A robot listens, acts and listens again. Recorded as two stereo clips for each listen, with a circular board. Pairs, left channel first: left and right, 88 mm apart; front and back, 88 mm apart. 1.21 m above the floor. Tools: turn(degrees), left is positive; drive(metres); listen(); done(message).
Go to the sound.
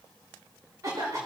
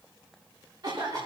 turn(degrees=-140)
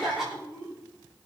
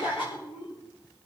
drive(metres=1.0)
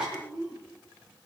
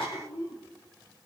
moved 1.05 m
turn(degrees=-10)
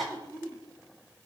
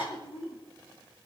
drive(metres=1.0)
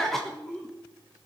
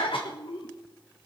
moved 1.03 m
drive(metres=1.0)
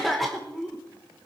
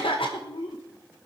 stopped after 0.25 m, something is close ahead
done("I am next to the cough.")